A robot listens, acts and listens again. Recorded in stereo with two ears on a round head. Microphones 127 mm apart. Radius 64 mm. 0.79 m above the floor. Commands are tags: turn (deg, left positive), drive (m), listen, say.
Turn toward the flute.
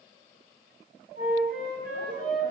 <turn deg="-70"/>
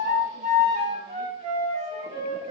<turn deg="-45"/>
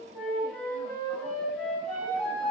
<say>Found it: a flute, straight ahead.</say>